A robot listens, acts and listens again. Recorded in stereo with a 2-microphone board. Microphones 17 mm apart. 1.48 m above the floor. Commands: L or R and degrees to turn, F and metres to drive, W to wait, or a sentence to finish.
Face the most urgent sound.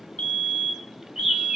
L55
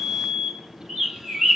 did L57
L15
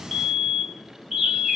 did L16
Found it: a fire alarm, straight ahead.